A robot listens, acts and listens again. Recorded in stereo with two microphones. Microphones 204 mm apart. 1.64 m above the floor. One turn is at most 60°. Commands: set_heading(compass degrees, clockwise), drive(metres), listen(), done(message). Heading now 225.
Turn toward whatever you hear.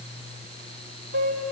set_heading(285)
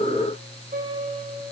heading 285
set_heading(325)
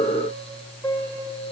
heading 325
set_heading(310)
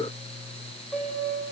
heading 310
done("Found it: a piano, straight ahead, over 4 m away.")